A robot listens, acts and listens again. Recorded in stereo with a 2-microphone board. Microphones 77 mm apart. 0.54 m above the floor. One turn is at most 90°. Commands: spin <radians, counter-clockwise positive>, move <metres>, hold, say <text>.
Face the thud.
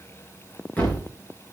spin 0.35
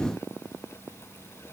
hold
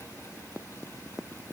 say I heard a thud, but can't make it out now. It was about straight ahead or 140° left.